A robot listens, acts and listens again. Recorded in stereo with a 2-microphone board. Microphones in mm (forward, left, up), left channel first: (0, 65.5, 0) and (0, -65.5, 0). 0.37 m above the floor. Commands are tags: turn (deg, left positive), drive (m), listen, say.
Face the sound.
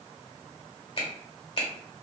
<turn deg="45"/>
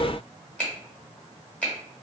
<turn deg="10"/>
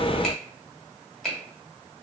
<say>Facing the finger snap, 1 to 2 m away.</say>